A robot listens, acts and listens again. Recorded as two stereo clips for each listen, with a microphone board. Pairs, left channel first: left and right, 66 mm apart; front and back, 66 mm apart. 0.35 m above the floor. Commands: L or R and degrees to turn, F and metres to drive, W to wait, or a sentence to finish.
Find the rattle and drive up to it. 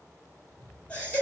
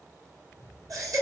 R40
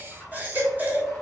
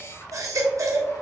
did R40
L10
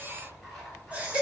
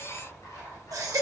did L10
F1.0
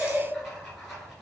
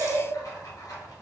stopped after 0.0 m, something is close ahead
Blocked. The rattle is further on, straight ahead.